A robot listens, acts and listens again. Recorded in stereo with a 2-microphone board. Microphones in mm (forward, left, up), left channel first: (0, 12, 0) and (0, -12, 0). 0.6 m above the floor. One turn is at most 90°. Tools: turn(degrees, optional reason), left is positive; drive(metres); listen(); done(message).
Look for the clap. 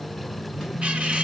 listen()
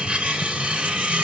listen()
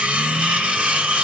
done("I can't make out a clap to turn to.")